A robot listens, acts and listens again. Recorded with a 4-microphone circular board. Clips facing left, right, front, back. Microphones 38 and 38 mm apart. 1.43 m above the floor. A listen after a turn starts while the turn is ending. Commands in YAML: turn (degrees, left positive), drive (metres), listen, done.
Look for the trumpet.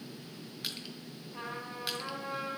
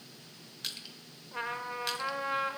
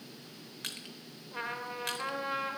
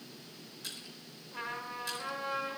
turn: -70
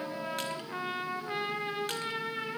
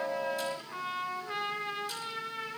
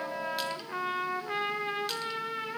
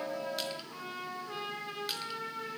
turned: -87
turn: 20
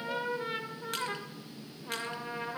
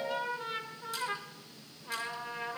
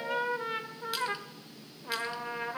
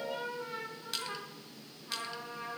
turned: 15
done: "Found it: a trumpet, straight ahead."